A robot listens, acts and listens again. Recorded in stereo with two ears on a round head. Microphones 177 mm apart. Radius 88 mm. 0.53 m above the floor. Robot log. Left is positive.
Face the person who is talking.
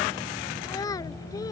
note: The child speaking: about 20° left or 160° left.
cmd yaw +20
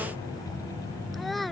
end: Found it: a child speaking, straight ahead.